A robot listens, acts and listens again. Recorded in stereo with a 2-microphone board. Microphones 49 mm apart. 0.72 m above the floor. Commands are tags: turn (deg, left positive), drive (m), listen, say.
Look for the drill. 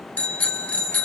<listen/>
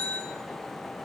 <listen/>
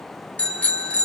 <say>I can't make out a drill to turn to.</say>